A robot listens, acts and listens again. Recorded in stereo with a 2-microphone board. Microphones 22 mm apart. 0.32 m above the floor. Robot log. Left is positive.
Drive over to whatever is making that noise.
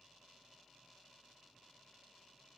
cmd idle
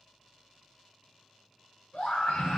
note: The scream: about 60° left or 120° left.
cmd yaw +60
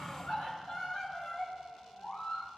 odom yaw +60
note: So it is at 50° left.
cmd yaw +50
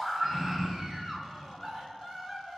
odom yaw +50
note: The scream is now 15° left.
cmd yaw +15
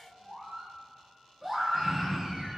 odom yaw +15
cmd fwd 1.0
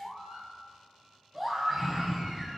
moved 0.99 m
cmd fwd 1.0
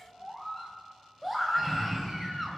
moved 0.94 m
note: The scream is now 10° left.
cmd yaw +10
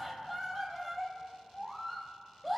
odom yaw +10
cmd fwd 1.0
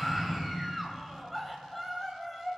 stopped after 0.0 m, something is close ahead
note: The scream is now 10° left.
cmd yaw +10
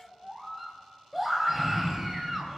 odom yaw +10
end: I am next to the scream.